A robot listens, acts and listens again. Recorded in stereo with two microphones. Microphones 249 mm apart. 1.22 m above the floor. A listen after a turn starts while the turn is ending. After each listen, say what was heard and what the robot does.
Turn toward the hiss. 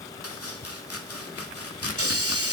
The hiss: about 65° right or 115° right. Turn 65° right.
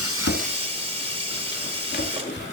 So it is at 25° right. Turn 25° right.
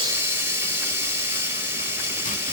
The hiss is now 10° right. Turn 10° right.
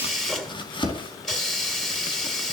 Found it: a hiss, straight ahead.